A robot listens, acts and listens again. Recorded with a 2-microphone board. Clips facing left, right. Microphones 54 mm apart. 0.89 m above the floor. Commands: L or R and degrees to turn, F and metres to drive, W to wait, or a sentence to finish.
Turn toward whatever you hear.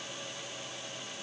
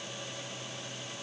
W
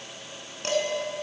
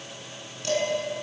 L50
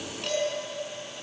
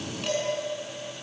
Found it: dishes clattering, straight ahead, over 4 m away.